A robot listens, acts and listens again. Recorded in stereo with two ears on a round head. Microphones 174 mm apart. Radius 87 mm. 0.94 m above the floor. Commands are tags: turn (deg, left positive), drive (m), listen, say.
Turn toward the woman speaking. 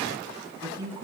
<turn deg="-20"/>
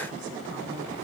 <listen/>
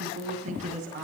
<turn deg="-140"/>
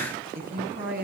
<turn deg="-50"/>
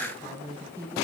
<turn deg="-15"/>
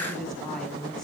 <say>Found it: a woman speaking, straight ahead.</say>